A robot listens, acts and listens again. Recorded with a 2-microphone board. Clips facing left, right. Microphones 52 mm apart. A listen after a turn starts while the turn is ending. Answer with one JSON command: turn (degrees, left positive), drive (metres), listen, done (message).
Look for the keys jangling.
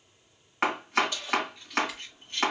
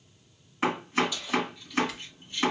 {"turn": 60}
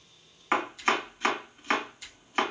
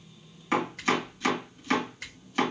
{"listen": true}
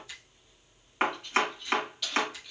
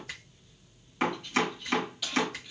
{"done": "Facing the keys jangling."}